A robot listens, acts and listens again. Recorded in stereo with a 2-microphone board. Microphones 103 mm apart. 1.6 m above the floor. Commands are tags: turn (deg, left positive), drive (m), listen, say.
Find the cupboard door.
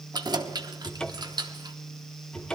<turn deg="30"/>
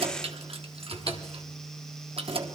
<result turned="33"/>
<turn deg="140"/>
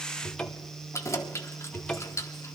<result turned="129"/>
<turn deg="10"/>
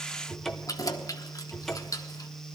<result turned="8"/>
<say>Found it: a cupboard door, straight ahead, under 1 m away.</say>